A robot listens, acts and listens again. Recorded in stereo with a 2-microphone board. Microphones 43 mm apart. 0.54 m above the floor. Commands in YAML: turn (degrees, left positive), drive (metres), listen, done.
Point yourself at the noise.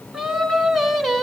turn: 30
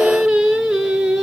turn: -10
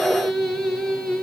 turn: 10
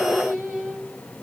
done: "Found it: singing, straight ahead."